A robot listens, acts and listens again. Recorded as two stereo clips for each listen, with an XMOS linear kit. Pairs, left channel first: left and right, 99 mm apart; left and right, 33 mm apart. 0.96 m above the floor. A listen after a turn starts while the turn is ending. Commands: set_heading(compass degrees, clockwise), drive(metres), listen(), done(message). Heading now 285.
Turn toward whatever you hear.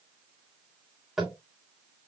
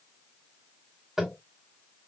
set_heading(255)
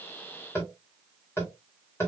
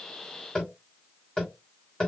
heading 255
set_heading(105)
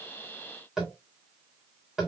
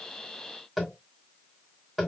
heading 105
done("Found it: tapping, straight ahead.")